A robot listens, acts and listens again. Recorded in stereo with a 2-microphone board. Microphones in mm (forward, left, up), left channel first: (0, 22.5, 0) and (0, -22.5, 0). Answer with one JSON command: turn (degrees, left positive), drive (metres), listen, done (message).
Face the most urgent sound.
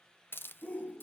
{"turn": 30}
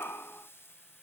{"turn": 120}
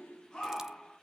{"turn": 20}
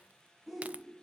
{"done": "Facing the shout."}